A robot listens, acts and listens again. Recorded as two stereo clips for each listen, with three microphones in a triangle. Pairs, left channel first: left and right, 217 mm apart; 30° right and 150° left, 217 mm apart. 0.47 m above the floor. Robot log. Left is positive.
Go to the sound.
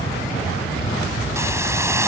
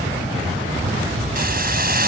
note: The hiss: 165° right.
cmd yaw -165
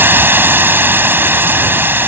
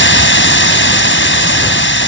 note: The hiss is now 10° right.
cmd yaw -10
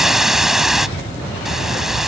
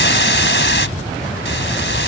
cmd fwd 1.0
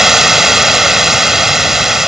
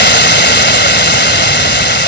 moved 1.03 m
cmd fwd 1.0
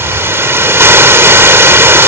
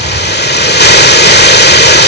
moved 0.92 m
note: The hiss is now 15° right.
cmd yaw -15
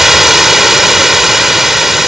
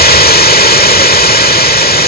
cmd fwd 1.0
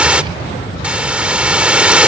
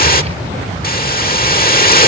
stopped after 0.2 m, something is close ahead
end: I am next to the hiss.